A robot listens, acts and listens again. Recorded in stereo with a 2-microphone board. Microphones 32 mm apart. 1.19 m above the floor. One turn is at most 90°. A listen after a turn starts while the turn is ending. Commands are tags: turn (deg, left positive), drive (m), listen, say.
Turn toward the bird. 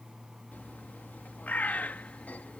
<turn deg="60"/>
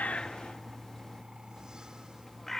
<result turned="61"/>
<turn deg="10"/>
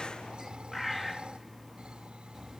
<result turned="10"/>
<say>Found it: a bird, straight ahead.</say>